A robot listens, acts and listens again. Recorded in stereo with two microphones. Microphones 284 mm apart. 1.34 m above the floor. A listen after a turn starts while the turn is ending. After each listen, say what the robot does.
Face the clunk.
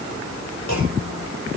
Turn 90° left.
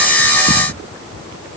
I heard a clunk from this way, but can't make it out now.